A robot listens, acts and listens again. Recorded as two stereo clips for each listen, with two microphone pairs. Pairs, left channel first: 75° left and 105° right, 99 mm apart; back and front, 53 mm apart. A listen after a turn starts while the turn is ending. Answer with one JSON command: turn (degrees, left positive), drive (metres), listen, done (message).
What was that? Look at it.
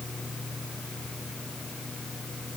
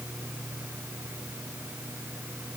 {"listen": true}
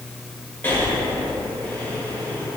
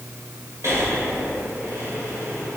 {"turn": 10}
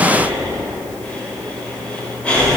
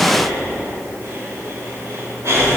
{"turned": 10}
{"done": "Found it: breathing, straight ahead."}